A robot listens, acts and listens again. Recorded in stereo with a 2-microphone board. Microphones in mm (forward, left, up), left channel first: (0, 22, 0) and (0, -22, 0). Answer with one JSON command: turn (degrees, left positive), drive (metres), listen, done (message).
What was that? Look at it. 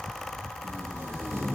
{"turn": -90}
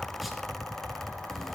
{"listen": true}
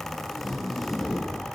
{"done": "Found it: tape being pulled, straight ahead, 2 to 4 m away."}